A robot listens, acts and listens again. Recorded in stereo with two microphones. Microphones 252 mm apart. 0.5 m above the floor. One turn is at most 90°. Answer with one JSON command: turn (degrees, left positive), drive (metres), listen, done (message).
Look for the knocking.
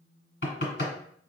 {"turn": 45}
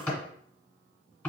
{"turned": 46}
{"done": "Found it: knocking, straight ahead, 1 to 2 m away."}